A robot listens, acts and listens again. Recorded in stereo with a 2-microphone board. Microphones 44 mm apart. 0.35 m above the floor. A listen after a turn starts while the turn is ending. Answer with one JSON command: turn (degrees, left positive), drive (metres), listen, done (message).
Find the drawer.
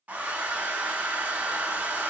{"listen": true}
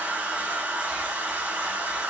{"listen": true}
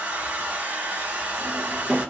{"turn": -30}
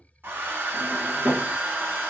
{"turn": -140}
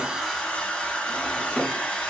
{"turn": -10}
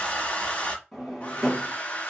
{"done": "Found it: a drawer, straight ahead."}